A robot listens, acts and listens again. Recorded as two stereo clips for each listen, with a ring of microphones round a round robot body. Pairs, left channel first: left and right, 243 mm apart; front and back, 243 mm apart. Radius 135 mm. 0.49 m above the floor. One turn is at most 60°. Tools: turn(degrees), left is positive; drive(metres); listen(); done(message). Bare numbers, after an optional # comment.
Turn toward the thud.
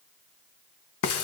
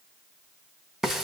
listen()
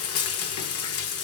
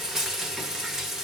listen()
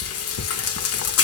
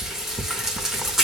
done("I can't make out a thud, only frying.")